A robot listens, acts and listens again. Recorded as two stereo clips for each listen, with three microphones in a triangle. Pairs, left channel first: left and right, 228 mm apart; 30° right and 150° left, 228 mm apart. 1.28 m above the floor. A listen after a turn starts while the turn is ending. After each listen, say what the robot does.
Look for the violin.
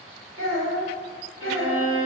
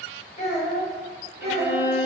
Turn 110° left.
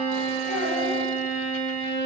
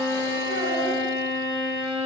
Turn 25° right.
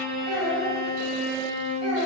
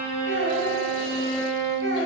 Facing the violin, 1 to 2 m away.